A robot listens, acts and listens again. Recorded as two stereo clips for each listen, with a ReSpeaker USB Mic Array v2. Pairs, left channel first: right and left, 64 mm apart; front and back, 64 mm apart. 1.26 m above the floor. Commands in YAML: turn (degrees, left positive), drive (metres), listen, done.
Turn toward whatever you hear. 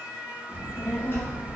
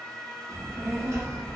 turn: -140
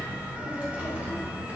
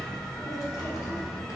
turn: 20
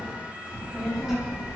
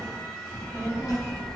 turn: 10
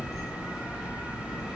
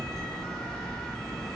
done: "Found it: a child speaking, straight ahead, under 1 m away."